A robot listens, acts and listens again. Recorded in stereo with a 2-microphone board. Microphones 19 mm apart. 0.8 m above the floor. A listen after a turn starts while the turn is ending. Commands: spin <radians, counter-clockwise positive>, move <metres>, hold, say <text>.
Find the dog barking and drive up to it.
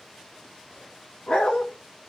spin 1.57
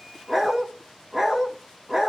spin -0.26
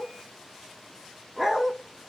move 1.0
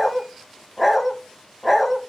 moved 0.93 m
move 1.0
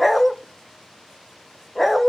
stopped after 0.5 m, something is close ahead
say I am next to the dog barking.